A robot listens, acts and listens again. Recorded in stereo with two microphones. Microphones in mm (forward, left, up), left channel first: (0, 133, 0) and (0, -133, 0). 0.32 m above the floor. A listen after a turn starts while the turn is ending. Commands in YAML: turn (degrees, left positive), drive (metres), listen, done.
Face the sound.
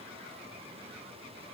listen: true
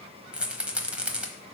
turn: -30
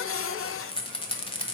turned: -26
turn: 25
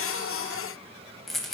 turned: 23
done: "Found it: a rattle, straight ahead, 1 to 2 m away."